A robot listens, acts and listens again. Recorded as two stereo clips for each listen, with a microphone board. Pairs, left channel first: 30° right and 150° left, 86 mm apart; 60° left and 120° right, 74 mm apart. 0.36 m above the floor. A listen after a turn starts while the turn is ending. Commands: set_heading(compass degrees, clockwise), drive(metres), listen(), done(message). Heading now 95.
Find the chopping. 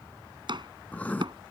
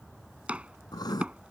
set_heading(290)
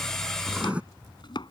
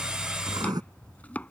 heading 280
set_heading(290)
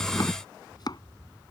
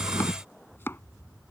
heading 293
done("Found it: chopping, straight ahead.")